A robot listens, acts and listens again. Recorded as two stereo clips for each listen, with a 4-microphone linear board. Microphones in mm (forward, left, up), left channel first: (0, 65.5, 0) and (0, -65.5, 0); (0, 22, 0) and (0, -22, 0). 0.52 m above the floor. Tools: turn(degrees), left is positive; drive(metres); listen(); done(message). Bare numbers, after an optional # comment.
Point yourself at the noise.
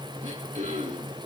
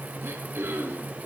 # The throat clearing: about 70° right or 110° right.
turn(-70)
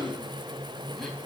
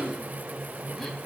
listen()
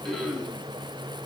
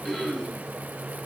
done("Facing the throat clearing.")